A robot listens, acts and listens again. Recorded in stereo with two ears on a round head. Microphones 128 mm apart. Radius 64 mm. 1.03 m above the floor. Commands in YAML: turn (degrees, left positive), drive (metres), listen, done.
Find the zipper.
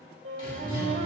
turn: -40
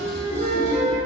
turn: -95
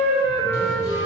listen: true
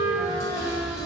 turn: -40
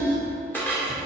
listen: true
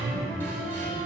turn: -10
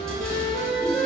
done: "Facing the zipper."